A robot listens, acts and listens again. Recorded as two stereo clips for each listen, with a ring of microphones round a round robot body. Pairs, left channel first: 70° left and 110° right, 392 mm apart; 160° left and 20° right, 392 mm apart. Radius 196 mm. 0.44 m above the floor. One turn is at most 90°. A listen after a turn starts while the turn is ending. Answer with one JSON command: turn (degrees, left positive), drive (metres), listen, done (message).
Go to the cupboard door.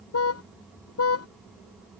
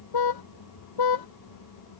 {"listen": true}
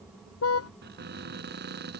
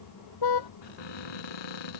{"turn": 90}
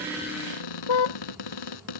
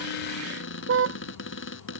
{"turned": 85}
{"turn": 90}
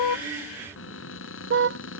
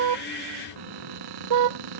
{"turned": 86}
{"turn": 10}
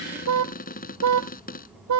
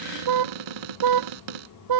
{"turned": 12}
{"drive": 1.0}
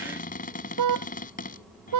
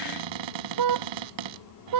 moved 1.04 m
{"drive": 1.0}
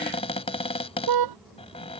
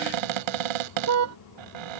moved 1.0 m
{"turn": -10}
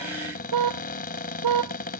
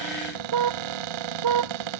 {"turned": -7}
{"drive": 1.0}
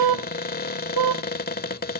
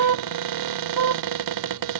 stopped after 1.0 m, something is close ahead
{"done": "Arrived at the cupboard door, straight ahead."}